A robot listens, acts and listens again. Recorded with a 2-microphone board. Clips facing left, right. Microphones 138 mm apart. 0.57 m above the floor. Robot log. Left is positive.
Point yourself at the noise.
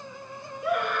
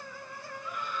note: The scream: about 75° left or 105° left.
cmd yaw +75
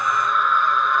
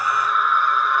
end: Found it: a scream, straight ahead.